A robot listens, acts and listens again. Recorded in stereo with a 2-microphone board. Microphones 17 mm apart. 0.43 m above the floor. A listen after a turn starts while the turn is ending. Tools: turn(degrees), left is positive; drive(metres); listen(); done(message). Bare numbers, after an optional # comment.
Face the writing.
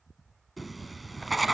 turn(30)
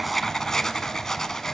# So it is at 150° left.
turn(150)
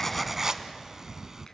# The writing is now 30° right.
turn(-30)
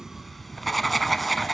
done("Facing the writing.")